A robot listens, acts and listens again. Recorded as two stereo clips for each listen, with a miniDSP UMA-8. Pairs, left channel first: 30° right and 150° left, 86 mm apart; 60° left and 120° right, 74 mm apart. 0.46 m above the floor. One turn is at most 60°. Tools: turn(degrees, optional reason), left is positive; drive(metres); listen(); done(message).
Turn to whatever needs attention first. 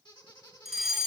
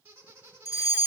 turn(degrees=60, reason="The fire alarm: 65° left.")
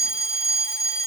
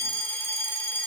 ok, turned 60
done("Facing the fire alarm.")